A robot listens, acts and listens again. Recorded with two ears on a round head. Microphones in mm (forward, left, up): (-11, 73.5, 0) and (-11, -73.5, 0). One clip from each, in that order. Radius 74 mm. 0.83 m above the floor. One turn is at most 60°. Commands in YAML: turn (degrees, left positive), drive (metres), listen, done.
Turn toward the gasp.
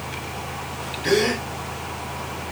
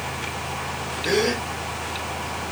turn: 50
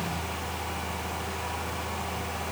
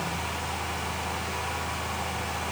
listen: true
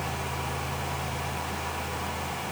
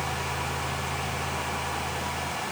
done: "I heard a gasp, but can't make it out now. It was about straight ahead or 80° left."